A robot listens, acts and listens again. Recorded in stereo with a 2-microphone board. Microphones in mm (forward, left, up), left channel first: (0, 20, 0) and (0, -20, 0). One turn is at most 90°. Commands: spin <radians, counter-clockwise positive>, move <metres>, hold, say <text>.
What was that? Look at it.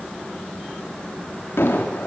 spin 1.57
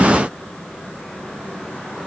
say Facing where the explosion came from. I can't hear it now.